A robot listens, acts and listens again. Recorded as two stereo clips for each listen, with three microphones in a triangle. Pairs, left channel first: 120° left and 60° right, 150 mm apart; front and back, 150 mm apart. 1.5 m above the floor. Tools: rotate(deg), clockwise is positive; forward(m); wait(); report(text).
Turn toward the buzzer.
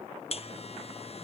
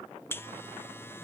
rotate(-75)
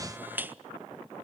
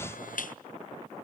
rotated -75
rotate(-15)
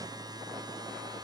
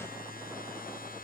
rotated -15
report("Found it: a buzzer, straight ahead, under 1 m away.")